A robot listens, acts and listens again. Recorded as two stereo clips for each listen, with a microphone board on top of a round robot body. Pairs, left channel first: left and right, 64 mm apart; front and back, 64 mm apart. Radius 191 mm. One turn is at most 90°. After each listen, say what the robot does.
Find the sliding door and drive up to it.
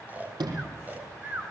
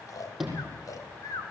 Turn 90° right.
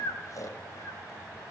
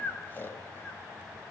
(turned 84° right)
Turn 15° right.
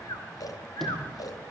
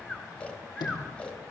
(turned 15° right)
Drive 1.0 m forward.
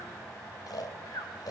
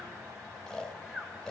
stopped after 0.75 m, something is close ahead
Keep listening.
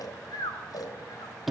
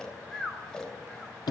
Blocked. The sliding door is further on, straight ahead.